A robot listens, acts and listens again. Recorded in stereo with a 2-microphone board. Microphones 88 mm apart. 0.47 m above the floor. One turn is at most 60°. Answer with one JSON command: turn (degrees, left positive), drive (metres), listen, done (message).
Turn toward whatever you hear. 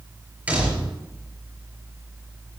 {"turn": -15}
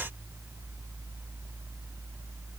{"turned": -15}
{"listen": true}
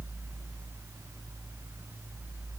{"done": "I heard a door slam, but can't make it out now. It was about straight ahead or 150° right."}